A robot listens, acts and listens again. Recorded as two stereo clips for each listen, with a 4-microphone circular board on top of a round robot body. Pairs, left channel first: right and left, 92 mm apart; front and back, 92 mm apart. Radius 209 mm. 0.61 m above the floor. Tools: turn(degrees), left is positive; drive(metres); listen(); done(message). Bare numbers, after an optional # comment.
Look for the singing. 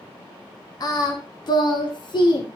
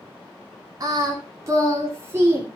# The singing: 115° right.
turn(-115)
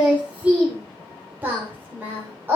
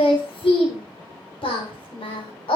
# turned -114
# The singing is now 25° left.
turn(25)
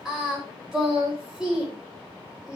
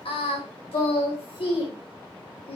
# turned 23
done("Facing the singing.")